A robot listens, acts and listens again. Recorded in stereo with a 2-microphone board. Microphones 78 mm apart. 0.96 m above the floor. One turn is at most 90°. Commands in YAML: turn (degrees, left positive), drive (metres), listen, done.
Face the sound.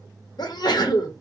turn: 60
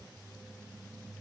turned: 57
listen: true
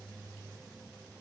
done: "I heard a sneeze, but can't make it out now. It was about 5° left or 60° left."